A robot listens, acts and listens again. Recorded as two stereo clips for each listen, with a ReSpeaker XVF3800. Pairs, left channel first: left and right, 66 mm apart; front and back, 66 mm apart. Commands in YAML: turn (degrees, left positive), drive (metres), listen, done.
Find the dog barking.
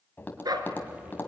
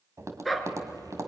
turn: -90
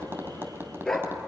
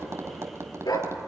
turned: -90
turn: 10
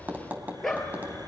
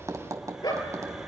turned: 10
done: "Facing the dog barking, 2 to 4 m away."